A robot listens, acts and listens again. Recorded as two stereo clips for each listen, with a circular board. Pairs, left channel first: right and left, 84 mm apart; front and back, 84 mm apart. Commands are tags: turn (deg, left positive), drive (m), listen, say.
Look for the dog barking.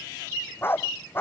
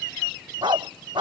<turn deg="-155"/>
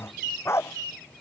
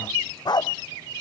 <turn deg="-35"/>
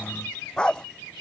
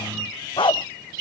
<turn deg="-10"/>
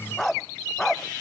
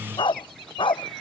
<say>Facing the dog barking.</say>